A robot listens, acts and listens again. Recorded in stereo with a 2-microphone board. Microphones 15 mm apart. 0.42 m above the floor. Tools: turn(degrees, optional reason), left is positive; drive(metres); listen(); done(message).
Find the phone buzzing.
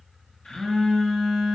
turn(degrees=65, reason="The phone buzzing: about 65° left or 115° left.")
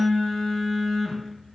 turn(degrees=40, reason="So it is at 40° left.")
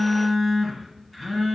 done("Found it: a phone buzzing, straight ahead, 2 to 4 m away.")